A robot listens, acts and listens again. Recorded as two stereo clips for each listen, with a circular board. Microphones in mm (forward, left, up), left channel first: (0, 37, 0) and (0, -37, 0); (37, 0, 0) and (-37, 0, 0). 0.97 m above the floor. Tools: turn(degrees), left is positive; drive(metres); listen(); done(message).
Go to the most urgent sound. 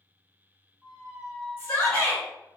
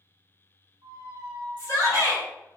turn(degrees=35)
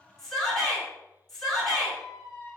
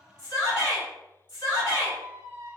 drive(metres=1.0)
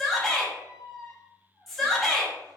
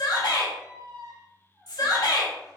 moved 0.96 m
drive(metres=1.0)
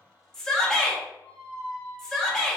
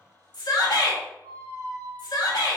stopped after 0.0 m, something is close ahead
turn(degrees=10)
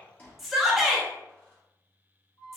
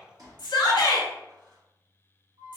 done("Arrived at the shout, straight ahead.")